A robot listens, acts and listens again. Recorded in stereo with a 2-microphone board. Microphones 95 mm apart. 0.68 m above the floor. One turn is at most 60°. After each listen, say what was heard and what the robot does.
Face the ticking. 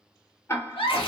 The ticking: about 25° left or 155° left. Turn 25° left.
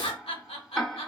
Found it: ticking, straight ahead.